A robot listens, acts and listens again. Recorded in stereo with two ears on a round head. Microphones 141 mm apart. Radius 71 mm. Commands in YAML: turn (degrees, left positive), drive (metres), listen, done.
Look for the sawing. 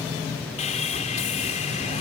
turn: 45
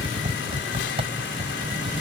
listen: true
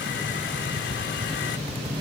listen: true
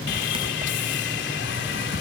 turn: 85
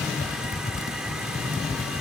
listen: true
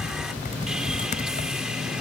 listen: true
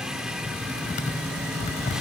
done: "I heard sawing from this way, but can't make it out now."